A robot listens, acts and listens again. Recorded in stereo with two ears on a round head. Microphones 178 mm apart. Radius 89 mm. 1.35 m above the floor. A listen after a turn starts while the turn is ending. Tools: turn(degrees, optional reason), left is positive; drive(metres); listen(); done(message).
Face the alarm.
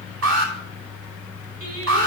turn(degrees=-70, reason="The alarm: about 70° right or 110° right.")
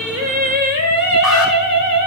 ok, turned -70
listen()
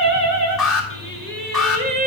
done("Found it: an alarm, straight ahead.")